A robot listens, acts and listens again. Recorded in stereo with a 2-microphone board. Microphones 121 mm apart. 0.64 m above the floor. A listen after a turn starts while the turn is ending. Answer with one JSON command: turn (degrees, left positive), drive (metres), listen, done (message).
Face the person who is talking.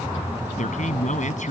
{"turn": 75}
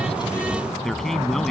{"done": "Facing the man speaking."}